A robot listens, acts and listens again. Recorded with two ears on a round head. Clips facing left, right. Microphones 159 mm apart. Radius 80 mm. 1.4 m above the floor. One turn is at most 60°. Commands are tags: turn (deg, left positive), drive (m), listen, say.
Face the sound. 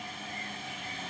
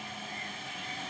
<listen/>
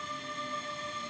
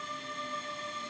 <listen/>
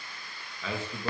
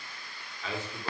<turn deg="60"/>
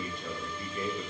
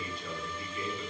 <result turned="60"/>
<turn deg="40"/>
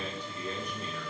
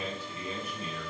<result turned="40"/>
<say>Facing the man speaking, 1 to 2 m away.</say>